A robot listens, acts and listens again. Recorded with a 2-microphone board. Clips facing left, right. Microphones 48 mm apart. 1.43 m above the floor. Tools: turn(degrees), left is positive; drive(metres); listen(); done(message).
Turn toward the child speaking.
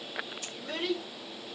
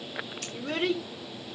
turn(degrees=-50)
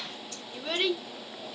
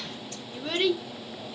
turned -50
done("Found it: a child speaking, straight ahead, 2 to 4 m away.")